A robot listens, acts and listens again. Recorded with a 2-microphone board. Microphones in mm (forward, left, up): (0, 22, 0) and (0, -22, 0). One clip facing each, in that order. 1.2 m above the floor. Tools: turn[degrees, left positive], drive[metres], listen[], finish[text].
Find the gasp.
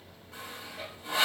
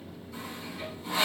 Action: listen[]
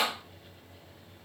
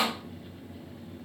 Action: listen[]
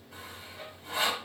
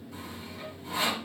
Action: finish[I can't make out a gasp to turn to.]